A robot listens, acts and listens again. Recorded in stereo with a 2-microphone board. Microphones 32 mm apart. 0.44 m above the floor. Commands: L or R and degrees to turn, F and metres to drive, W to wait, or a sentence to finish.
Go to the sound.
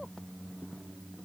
W
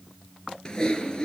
L25
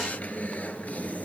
L130
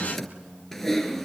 F1.0
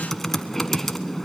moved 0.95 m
L10
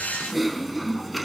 F1.0
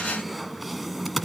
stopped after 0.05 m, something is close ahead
I am next to the typing on a keyboard.